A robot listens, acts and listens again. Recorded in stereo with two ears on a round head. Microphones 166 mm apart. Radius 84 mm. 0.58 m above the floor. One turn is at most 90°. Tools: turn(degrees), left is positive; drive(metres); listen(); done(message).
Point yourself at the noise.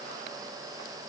listen()
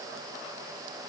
listen()
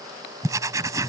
turn(degrees=-20)
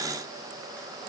listen()
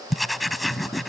done("Facing the writing.")